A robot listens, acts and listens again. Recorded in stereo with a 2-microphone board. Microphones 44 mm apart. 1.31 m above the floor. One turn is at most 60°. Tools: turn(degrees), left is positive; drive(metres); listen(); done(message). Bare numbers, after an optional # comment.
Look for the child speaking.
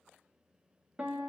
listen()
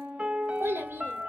# The child speaking: about 70° right or 110° right.
turn(-60)
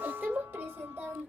# So it is at 45° right.
turn(-45)
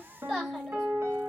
# The child speaking is now 15° right.
turn(-15)
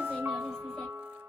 done("Found it: a child speaking, straight ahead.")